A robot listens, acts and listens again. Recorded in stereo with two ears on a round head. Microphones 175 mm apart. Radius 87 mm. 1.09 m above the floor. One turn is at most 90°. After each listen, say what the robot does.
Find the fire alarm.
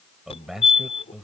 Turn 30° left.
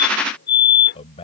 Turn 90° left.
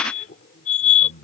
Turn 40° left.
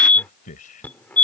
Turn 10° left.
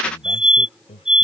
Facing the fire alarm.